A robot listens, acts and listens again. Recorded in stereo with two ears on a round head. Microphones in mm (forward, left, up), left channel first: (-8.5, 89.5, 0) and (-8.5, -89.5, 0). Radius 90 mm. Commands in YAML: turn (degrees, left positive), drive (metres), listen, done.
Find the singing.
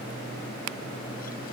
listen: true
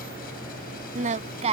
turn: -35
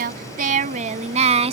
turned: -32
turn: -30
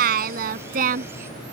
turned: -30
turn: -45
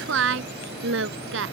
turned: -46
turn: -70
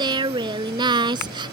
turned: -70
turn: -25
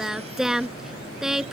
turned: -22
done: "Facing the singing."